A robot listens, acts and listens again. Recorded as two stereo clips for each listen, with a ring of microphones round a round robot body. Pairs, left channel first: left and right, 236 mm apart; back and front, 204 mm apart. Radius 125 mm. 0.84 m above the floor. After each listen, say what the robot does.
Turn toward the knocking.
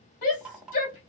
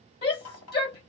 Turn 180° left.
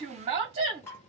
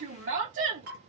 Turn 10° left.
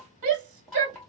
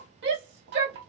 Facing the knocking.